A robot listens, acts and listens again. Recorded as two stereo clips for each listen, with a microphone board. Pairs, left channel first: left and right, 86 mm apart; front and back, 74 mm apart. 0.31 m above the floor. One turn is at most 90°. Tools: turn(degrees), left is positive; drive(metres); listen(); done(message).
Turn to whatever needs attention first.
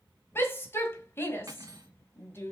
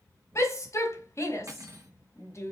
turn(degrees=35)
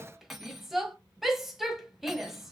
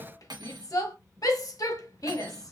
done("Facing the shout, 1 to 2 m away.")